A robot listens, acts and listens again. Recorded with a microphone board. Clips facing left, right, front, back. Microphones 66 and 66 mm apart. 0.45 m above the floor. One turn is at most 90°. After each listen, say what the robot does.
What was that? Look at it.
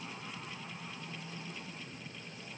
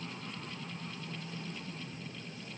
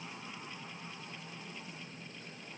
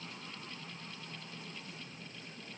Keep listening.
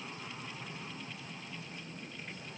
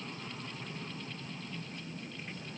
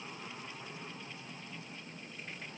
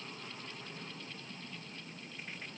Keep listening.
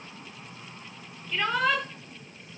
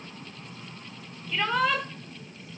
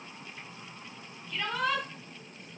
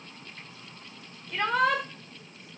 Turn 90° left.
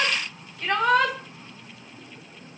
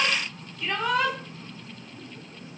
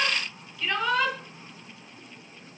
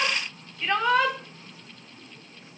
Turn 90° left.
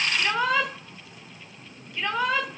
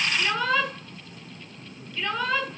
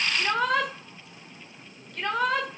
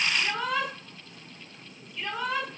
Turn 20° left.
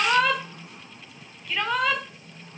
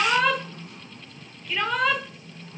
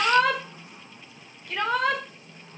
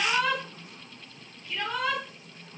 Found it: a shout, straight ahead.